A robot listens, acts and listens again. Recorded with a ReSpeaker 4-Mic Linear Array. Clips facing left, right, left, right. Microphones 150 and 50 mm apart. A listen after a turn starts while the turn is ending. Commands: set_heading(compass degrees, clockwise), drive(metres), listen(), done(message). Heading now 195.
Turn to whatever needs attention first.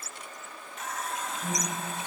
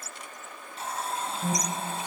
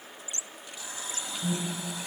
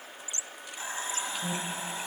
set_heading(230)
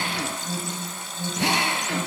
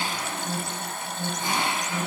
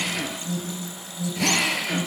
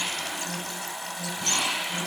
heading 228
done("Found it: an alarm, straight ahead.")